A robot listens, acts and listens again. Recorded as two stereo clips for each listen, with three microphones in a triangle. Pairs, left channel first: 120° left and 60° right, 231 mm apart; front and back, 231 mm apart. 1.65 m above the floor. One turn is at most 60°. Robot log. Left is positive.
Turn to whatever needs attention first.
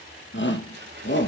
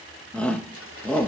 note: The shout: 85° left.
cmd yaw +60
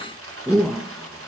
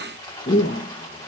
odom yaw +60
note: The shout is now 30° left.
cmd yaw +30
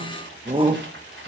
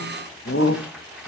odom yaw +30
note: The shout is now 10° left.
cmd yaw +10
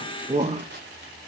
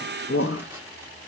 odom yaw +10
end: Found it: a shout, straight ahead.